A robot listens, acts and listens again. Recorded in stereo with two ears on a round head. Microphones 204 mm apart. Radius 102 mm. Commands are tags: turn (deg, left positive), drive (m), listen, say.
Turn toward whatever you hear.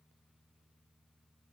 <listen/>
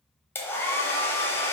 <turn deg="30"/>
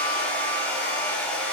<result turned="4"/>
<turn deg="30"/>
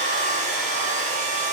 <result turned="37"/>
<turn deg="-30"/>
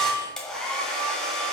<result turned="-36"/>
<say>Facing the hair dryer.</say>